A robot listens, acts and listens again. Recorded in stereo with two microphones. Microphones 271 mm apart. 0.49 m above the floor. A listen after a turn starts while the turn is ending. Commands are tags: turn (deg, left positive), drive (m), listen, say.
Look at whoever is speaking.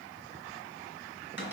<listen/>
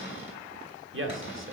<turn deg="-50"/>
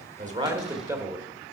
<turn deg="-10"/>
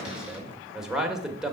<say>Found it: a man speaking, straight ahead.</say>